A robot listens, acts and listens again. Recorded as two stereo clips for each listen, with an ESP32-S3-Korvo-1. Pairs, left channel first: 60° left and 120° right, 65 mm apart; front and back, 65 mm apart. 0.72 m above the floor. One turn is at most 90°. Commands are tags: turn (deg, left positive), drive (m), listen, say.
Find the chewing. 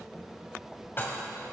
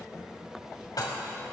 <listen/>
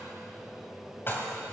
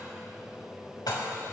<listen/>
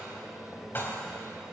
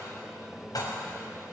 <say>I can't make out chewing to turn to.</say>